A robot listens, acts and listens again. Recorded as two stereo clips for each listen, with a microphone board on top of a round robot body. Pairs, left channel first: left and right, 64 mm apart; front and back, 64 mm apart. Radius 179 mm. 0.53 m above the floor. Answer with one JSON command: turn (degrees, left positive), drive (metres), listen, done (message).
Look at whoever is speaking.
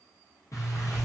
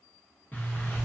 {"listen": true}
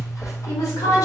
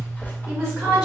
{"turn": 95}
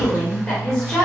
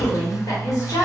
{"done": "Facing the woman speaking."}